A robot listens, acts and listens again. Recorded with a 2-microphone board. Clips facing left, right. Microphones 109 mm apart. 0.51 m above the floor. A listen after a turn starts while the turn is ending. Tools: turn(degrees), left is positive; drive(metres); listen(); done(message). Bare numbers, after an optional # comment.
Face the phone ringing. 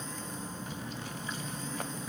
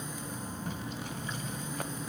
listen()
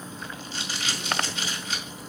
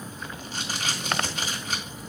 listen()
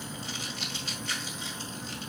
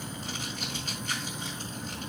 done("I can't make out a phone ringing to turn to.")